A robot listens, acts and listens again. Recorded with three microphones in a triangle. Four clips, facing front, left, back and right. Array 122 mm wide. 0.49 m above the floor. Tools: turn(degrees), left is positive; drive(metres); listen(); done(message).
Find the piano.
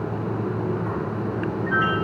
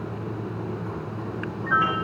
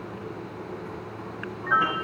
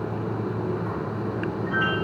turn(degrees=155)
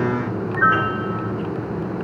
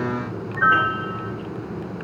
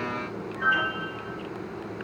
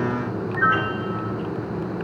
turn(degrees=35)
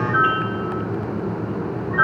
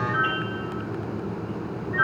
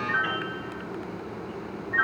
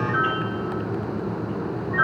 turn(degrees=-10)
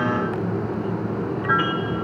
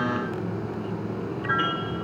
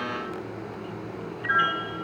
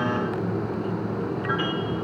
done("Facing the piano, 2 to 4 m away.")